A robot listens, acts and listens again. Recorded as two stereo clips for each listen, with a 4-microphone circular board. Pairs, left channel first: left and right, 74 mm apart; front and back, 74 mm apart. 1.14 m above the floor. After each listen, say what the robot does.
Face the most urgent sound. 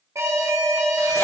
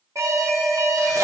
Turn 135° right.
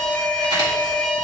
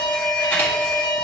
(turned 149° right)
Turn 15° left.
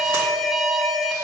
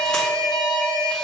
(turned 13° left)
Facing the alarm.